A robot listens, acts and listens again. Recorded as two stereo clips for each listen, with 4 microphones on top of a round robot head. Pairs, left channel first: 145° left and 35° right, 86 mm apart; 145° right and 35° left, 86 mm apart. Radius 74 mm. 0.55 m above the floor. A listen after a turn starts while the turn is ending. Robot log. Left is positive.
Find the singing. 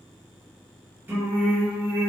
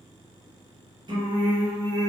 note: The singing: 20° left.
cmd yaw +20
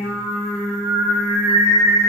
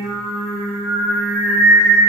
note: The singing is now 40° right.
cmd yaw -40
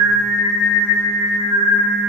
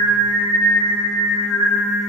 note: The singing is now 55° right.
cmd yaw -55
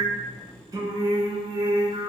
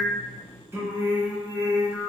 note: The singing is now 20° right.
cmd yaw -20
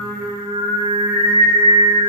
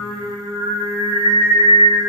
end: Found it: singing, straight ahead.